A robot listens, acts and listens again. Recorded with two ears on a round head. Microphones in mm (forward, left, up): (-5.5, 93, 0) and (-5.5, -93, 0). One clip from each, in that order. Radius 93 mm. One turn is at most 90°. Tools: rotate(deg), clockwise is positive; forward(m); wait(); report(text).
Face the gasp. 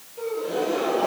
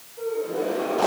rotate(-90)
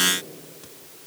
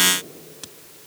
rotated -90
report("I heard a gasp from this way, but can't make it out now.")